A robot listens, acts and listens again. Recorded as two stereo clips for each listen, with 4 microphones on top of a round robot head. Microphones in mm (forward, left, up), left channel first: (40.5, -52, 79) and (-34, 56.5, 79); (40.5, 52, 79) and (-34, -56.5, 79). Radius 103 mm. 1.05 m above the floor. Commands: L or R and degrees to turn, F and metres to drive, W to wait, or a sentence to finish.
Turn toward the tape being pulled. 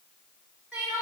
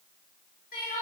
W
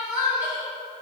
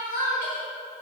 W
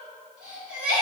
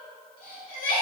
I can't make out tape being pulled, only crying.